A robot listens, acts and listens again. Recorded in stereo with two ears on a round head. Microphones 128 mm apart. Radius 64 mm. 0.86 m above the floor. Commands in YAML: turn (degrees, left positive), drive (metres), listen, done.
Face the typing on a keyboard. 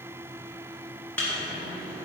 listen: true
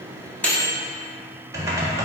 turn: -20
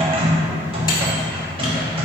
turn: -135
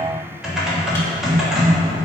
done: "Facing the typing on a keyboard, 1 to 2 m away."